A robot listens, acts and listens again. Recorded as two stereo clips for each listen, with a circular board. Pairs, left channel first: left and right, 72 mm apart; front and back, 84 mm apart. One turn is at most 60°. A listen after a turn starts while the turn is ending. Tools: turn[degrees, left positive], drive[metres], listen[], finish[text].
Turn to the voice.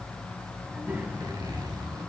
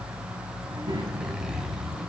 Thought: The child speaking: 155° right.
Action: turn[-60]
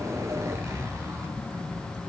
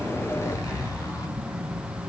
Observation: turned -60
Thought: The child speaking is now 105° right.
Action: turn[-60]
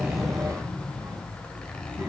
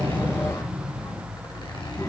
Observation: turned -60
Thought: The child speaking is now 45° right.
Action: turn[-45]
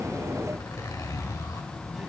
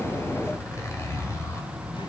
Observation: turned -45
Action: listen[]
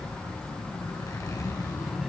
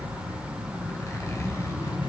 Thought: The child speaking is now 10° right.
Action: turn[-10]
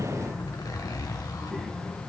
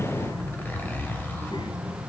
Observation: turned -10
Action: finish[Facing the child speaking, 2 to 4 m away.]